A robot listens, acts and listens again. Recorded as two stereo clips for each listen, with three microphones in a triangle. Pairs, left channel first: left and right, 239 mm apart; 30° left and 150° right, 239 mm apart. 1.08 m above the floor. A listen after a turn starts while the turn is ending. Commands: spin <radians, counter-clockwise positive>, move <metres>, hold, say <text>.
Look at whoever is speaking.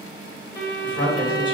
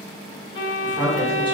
spin 2.53
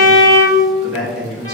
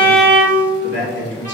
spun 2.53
say Facing the man speaking, 1 to 2 m away.